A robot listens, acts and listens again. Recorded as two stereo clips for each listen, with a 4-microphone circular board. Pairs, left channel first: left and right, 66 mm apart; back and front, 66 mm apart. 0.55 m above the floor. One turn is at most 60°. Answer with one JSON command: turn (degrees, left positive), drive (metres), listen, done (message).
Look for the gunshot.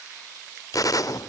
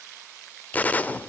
{"turn": 60}
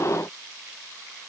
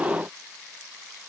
{"turn": 55}
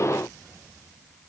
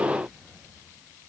{"done": "Facing where the gunshot came from. I can't hear it now."}